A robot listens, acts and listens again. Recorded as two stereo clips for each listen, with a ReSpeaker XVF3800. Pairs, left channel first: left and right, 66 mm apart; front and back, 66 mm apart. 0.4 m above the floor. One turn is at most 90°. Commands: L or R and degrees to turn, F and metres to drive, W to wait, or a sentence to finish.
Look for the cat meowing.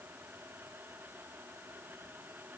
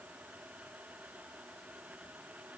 W
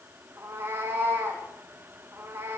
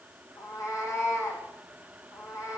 R30
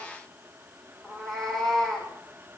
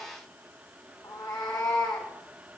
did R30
Facing the cat meowing.